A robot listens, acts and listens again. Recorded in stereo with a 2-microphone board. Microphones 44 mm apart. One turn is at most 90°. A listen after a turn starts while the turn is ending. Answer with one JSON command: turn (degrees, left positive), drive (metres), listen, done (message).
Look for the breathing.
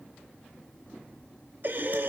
{"turn": -50}
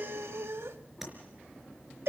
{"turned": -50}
{"turn": -80}
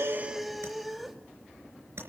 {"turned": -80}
{"done": "Found it: breathing, straight ahead."}